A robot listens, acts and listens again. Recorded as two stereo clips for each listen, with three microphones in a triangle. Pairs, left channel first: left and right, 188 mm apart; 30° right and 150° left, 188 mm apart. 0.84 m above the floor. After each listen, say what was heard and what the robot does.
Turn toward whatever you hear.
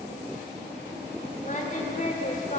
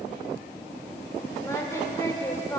The singing: 45° left. Turn 45° left.
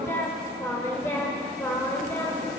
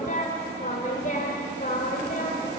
The singing is now 15° left. Turn 15° left.
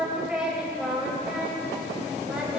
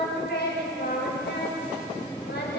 Facing the singing, over 4 m away.